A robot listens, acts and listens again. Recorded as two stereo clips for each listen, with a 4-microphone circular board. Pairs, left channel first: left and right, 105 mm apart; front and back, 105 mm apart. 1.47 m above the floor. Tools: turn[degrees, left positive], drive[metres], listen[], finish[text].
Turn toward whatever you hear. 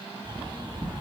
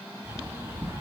Thought: The bird: 120° right.
Action: turn[-120]
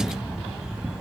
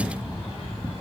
Thought: The bird is now 10° right.
Action: turn[-10]
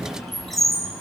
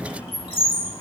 Action: finish[Facing the bird, 2 to 4 m away.]